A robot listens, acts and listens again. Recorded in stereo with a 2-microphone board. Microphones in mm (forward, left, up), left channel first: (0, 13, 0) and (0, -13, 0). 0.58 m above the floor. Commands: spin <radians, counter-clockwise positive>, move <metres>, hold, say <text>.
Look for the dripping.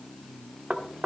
hold
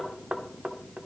hold
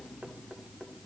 say I can't make out dripping to turn to.